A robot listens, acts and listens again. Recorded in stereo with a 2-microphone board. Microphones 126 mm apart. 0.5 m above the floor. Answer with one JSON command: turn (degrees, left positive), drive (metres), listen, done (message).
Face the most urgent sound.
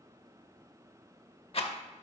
{"listen": true}
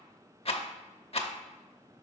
{"listen": true}
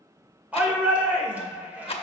{"turn": -30}
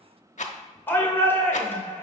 {"turn": 20}
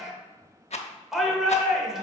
{"done": "Facing the shout, 1 to 2 m away."}